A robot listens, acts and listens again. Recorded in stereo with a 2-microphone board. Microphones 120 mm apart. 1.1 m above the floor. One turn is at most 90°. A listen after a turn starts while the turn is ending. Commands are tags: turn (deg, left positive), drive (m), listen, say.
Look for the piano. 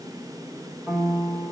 <turn deg="-30"/>
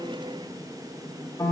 <turn deg="20"/>
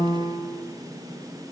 <say>Found it: a piano, straight ahead, under 1 m away.</say>